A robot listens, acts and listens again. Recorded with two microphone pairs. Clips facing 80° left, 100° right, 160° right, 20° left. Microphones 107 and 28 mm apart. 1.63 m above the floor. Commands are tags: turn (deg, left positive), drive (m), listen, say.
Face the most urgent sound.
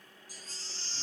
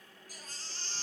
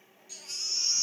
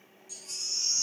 <turn deg="-105"/>
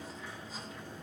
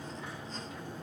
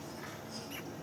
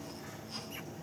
<listen/>
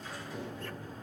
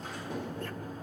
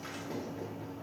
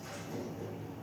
<listen/>
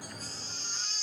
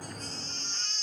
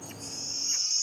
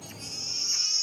<say>Facing the baby crying, 1 to 2 m away.</say>